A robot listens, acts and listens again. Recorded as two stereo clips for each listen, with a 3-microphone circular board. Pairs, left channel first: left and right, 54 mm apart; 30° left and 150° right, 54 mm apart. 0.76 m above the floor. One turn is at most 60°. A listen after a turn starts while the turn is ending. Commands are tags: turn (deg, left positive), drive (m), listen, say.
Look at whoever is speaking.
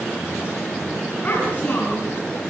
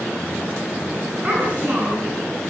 <turn deg="60"/>
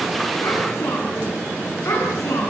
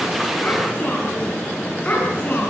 <turn deg="60"/>
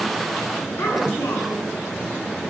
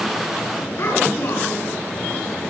<turn deg="55"/>
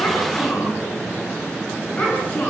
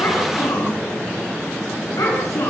<turn deg="30"/>
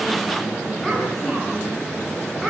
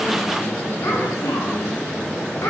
<say>Found it: a child speaking, straight ahead, over 4 m away.</say>